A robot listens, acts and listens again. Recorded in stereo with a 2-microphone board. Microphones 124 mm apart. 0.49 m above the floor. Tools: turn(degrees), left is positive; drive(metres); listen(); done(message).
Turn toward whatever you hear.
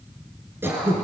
turn(degrees=-15)
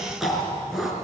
done("Facing the throat clearing, over 4 m away.")